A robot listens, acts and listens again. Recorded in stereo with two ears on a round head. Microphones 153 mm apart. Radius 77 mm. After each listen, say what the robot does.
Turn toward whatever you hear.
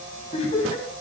Turn 40° left.
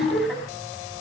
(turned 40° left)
Facing the laughter.